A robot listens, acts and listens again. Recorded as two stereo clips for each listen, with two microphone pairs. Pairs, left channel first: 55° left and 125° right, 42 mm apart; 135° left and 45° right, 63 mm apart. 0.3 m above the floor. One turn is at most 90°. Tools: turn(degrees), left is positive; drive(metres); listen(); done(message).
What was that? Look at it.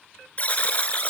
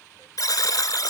turn(degrees=90)
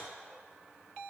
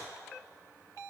turn(degrees=20)
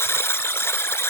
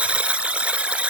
turn(degrees=30)
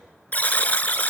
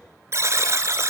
done("Found it: a buzzer, straight ahead, 1 to 2 m away.")